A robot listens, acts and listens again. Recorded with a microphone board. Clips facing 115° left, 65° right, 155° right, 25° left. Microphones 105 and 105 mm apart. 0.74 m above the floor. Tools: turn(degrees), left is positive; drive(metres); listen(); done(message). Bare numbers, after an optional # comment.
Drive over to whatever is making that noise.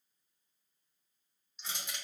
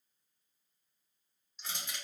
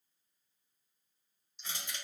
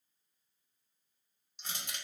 # The crushing: 25° left.
turn(25)
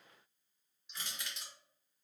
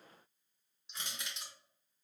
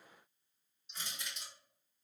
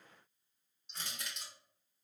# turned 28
drive(1.0)
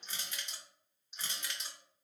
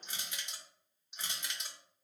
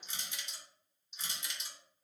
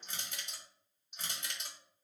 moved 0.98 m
drive(1.0)
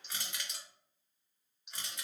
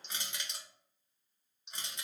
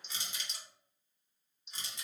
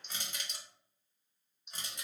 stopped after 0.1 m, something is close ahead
done("I am next to the crushing.")